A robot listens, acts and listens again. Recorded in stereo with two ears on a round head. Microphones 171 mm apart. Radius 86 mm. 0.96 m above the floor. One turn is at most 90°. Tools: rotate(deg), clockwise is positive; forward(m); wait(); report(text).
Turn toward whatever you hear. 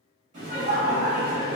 rotate(30)
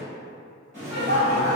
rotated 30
rotate(30)
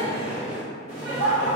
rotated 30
rotate(30)
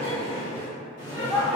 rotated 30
rotate(90)
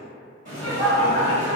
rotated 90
rotate(40)
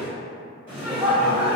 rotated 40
report("Facing the laughter, 1 to 2 m away.")